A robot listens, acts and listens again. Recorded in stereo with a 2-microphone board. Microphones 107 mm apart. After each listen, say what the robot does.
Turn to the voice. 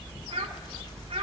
Turn 70° right.
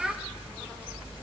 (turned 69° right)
Found it: a child speaking, straight ahead, under 1 m away.